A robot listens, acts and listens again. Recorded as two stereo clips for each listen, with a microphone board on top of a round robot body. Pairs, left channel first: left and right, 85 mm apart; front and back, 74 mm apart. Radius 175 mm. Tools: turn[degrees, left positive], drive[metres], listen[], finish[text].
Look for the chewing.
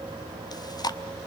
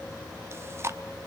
Thought: The chewing: 125° left.
Action: turn[125]
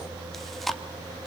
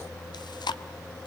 Action: finish[Facing the chewing.]